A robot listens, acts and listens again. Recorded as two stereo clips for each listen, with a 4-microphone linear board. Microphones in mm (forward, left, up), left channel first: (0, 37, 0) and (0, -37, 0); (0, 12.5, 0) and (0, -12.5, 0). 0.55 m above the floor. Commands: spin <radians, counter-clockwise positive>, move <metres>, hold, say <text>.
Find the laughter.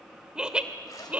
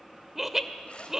spin -0.35
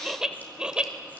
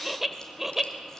spin -0.52
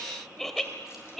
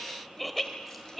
say Found it: laughter, straight ahead.